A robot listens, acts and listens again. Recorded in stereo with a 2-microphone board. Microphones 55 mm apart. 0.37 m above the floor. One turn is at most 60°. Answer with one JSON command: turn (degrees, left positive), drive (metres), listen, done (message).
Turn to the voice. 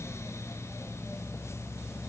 {"listen": true}
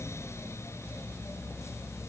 {"listen": true}
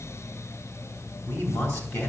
{"turn": 55}
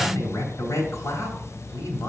{"turn": 60}
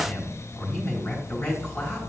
{"turn": 15}
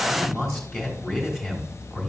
{"done": "Found it: a man speaking, straight ahead."}